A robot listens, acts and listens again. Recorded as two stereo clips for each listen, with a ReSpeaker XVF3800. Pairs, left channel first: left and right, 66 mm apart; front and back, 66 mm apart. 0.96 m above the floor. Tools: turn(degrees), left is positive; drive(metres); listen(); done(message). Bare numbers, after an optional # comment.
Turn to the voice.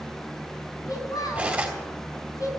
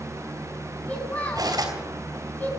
# The child speaking: 60° left.
turn(60)
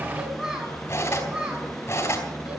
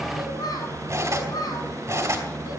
# The child speaking is now 15° right.
turn(-15)
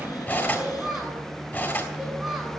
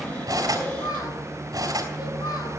done("Facing the child speaking, over 4 m away.")